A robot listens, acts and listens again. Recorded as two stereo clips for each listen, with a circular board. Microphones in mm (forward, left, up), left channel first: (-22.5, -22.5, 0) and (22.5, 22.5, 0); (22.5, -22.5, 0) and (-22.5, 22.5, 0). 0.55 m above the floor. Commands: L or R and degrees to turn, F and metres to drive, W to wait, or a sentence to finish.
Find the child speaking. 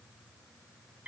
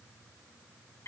W
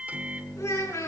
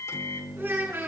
R175
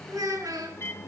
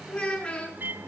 L30
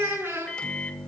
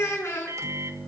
Found it: a child speaking, straight ahead, over 4 m away.